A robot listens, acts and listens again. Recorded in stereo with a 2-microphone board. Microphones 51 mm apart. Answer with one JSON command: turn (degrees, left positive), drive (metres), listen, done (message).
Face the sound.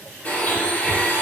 {"turn": 30}
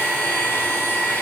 {"turn": 120}
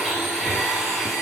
{"done": "Facing the blender."}